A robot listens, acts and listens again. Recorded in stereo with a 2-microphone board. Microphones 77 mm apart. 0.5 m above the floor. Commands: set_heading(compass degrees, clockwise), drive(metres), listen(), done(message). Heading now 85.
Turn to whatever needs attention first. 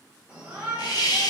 set_heading(100)
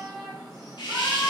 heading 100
done("Facing the shout, 2 to 4 m away.")